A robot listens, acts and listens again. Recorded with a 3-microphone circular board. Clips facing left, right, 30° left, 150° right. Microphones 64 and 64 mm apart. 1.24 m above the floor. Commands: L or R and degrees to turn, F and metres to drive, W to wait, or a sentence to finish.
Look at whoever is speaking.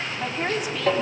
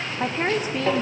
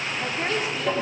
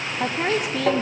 R140
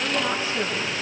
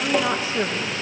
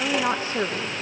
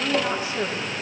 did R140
R15
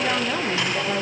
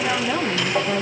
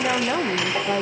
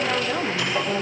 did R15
Found it: a woman speaking, straight ahead.